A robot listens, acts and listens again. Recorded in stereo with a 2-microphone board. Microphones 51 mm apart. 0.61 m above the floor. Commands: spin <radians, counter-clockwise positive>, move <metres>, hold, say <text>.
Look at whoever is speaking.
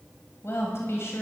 spin 1.05
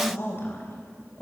spin 0.96
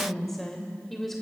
say Found it: a woman speaking, straight ahead, 2 to 4 m away.